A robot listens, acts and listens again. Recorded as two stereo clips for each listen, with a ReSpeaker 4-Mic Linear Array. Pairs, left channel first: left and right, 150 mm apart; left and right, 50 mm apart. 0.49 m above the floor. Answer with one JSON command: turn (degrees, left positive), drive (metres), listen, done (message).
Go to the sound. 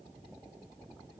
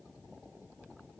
{"listen": true}
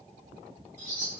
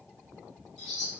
{"turn": 30}
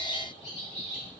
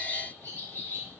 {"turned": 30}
{"turn": 135}
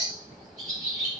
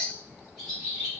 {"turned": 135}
{"drive": 1.0}
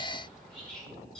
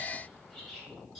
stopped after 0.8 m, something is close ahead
{"done": "I am next to the bird."}